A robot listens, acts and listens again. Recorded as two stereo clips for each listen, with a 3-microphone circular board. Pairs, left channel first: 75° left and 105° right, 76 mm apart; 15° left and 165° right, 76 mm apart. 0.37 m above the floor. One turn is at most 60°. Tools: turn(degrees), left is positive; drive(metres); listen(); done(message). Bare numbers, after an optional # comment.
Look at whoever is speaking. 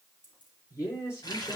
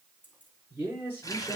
# The man speaking: 130° left.
turn(60)
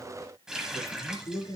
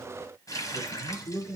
# The man speaking is now 55° left.
turn(55)
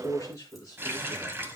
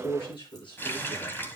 # The man speaking is now 30° left.
turn(30)
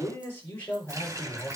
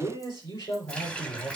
# The man speaking is now 15° left.
turn(15)
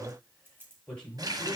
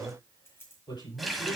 done("Facing the man speaking.")